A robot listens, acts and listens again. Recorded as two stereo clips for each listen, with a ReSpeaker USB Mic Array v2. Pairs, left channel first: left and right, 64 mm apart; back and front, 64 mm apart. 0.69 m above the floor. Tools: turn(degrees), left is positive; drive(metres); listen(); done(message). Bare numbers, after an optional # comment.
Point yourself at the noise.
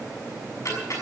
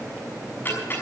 # The ticking: 125° left.
turn(125)
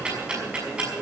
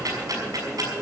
# The ticking is now 15° right.
turn(-15)
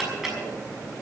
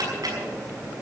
done("Facing the ticking, over 4 m away.")